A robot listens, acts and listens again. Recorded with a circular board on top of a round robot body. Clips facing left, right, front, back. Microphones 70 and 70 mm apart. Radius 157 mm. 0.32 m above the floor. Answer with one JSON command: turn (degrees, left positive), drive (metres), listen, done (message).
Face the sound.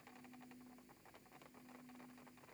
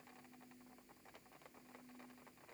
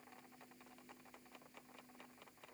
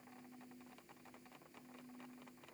{"listen": true}
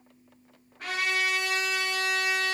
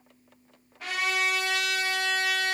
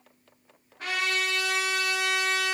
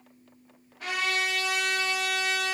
{"turn": 45}
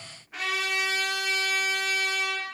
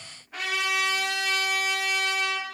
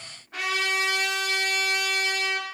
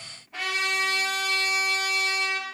{"done": "Found it: a trumpet, straight ahead."}